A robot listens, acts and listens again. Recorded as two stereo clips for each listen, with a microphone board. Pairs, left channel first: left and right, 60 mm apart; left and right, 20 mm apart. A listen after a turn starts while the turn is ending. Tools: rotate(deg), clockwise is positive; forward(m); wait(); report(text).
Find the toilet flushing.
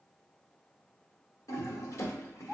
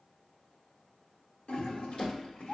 rotate(-90)
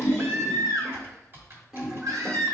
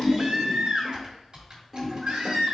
report("Found it: a toilet flushing, straight ahead, 1 to 2 m away.")